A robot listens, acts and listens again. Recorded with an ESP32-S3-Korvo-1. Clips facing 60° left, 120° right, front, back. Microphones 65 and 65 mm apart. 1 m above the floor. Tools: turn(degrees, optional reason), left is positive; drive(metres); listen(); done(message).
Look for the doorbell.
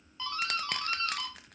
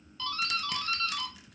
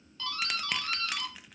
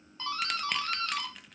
turn(degrees=130, reason="The doorbell: 130° left.")
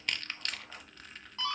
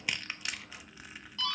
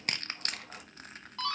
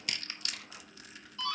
done("Found it: a doorbell, straight ahead.")